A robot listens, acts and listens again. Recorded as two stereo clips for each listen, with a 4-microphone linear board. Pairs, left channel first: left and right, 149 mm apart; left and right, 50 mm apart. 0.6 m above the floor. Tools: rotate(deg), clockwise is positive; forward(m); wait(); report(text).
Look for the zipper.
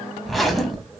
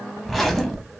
rotate(-30)
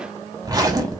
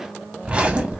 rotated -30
rotate(25)
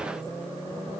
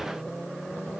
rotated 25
wait()
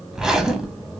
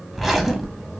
report("Found it: a zipper, straight ahead.")